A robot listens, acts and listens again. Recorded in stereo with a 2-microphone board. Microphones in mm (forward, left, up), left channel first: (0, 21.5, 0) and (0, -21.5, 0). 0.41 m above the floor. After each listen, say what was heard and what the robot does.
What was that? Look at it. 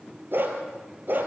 The dog barking: about 45° right or 135° right. Turn 45° right.
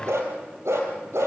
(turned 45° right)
So it is at 85° right. Turn 85° right.
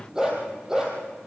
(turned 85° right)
The dog barking is now 15° right. Turn 15° right.
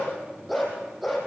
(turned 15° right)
Facing the dog barking.